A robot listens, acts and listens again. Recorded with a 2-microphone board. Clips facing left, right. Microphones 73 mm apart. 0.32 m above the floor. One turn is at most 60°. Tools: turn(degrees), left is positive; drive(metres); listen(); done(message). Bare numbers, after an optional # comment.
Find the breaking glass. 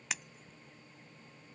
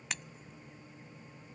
turn(30)
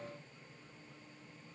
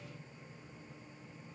listen()
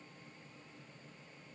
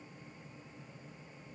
done("I heard breaking glass, but can't make it out now. It was about 25° right or 145° left.")